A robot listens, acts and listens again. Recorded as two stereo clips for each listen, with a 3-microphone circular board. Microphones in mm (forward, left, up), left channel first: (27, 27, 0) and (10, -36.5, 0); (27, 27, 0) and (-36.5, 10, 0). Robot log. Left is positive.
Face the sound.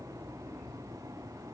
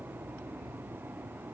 cmd idle
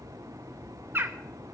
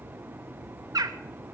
note: The bird: 160° right.
cmd yaw -160
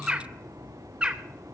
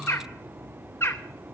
note: The bird is now 30° right.
cmd yaw -30
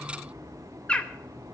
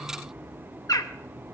end: Facing the bird.